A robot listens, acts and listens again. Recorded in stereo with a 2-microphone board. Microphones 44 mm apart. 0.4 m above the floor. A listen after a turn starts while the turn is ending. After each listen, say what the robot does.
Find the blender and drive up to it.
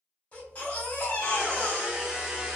Turn 30° right.
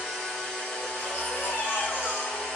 Turn 15° left.
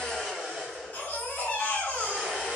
Drive 1.0 m forward.
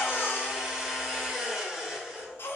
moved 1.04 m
Turn 10° right.
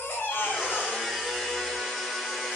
Drive 1.0 m forward.
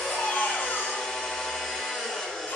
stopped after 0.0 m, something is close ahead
Turn 10° left.
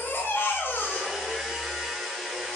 Arrived at the blender, straight ahead.